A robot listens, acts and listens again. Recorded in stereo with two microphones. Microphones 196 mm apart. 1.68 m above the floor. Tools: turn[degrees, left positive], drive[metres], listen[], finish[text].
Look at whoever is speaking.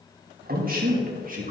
Thought: The man speaking: about 45° right or 135° right.
Action: turn[-45]
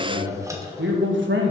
Thought: So it is at 110° right.
Action: turn[-110]
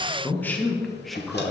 Action: finish[Found it: a man speaking, straight ahead.]